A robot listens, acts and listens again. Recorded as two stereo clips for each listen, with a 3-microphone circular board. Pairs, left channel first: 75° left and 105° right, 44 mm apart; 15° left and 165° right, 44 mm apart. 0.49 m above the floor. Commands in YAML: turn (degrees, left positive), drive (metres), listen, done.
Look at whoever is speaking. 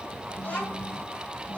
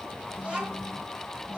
turn: 130
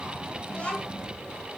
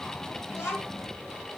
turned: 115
turn: 15
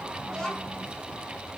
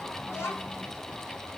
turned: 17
done: "Found it: a child speaking, straight ahead."